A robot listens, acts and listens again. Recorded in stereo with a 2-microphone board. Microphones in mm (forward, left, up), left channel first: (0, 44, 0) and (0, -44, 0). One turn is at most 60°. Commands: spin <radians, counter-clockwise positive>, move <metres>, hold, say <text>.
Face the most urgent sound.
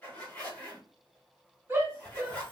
spin -0.52
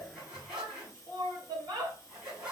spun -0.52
spin -1.05
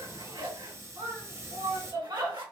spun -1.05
spin -0.96
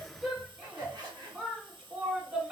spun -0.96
spin -0.26
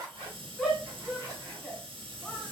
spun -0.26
say Found it: a shout, straight ahead.